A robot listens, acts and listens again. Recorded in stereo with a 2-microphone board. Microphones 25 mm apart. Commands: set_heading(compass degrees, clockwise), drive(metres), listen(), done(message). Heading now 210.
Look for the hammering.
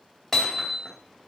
set_heading(180)
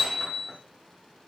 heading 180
set_heading(195)
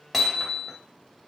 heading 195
done("Found it: hammering, straight ahead, 2 to 4 m away.")